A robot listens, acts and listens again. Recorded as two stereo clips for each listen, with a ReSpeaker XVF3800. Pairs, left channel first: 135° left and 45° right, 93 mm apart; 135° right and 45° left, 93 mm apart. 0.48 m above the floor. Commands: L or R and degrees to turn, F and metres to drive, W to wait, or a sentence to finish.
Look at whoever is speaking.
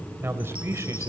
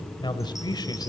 R100
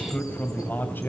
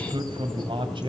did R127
L65
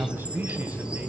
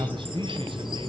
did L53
L25
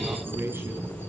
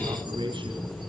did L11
L15
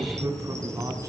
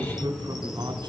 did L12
Facing the man speaking, 2 to 4 m away.